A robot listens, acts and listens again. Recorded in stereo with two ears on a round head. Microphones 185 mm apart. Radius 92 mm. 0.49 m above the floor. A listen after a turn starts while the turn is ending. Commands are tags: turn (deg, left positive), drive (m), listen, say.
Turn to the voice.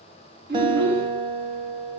<turn deg="-60"/>
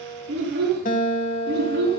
<turn deg="-55"/>
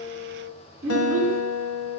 <turn deg="-10"/>
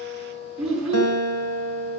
<say>Facing the child speaking.</say>